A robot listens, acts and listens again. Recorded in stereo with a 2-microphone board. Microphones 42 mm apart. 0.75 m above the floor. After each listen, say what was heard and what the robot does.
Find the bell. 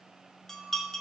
Turn 30° left.
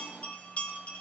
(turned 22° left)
So it is at 145° left. Turn 145° left.
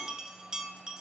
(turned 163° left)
The bell is now 15° right. Turn 15° right.
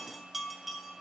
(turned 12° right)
Facing the bell.